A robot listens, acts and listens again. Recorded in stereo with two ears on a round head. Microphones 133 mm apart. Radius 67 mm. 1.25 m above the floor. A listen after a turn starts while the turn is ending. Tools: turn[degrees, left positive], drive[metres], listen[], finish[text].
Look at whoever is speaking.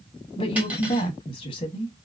Thought: The woman speaking: about 35° left or 145° left.
Action: turn[35]
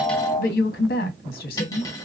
Thought: So it is at 110° left.
Action: turn[110]
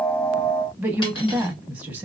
Thought: The woman speaking is now 10° right.
Action: turn[-10]
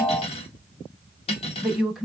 Action: finish[Found it: a woman speaking, straight ahead, under 1 m away.]